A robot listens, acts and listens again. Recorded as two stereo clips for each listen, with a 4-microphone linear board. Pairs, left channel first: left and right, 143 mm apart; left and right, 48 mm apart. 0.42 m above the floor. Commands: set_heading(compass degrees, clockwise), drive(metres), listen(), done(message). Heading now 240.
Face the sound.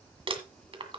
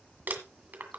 set_heading(280)
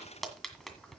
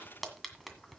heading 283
done("Facing the crumpling, 1 to 2 m away.")